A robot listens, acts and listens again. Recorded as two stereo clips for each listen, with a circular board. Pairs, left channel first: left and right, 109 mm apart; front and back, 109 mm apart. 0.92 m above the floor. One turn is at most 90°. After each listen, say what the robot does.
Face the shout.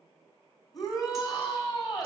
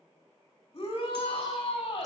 Turn 35° left.
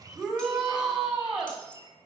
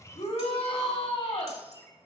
Turn 10° right.
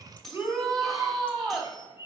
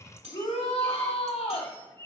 Facing the shout, 2 to 4 m away.